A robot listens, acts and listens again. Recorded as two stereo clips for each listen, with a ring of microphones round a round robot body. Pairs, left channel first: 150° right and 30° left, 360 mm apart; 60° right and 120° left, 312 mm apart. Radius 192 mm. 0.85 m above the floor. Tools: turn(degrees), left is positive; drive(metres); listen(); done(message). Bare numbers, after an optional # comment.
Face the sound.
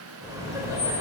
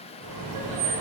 # The laughter: 110° left.
turn(110)
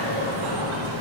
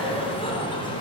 # The laughter is now 15° left.
turn(15)
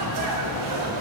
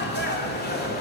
done("Found it: laughter, straight ahead, 2 to 4 m away.")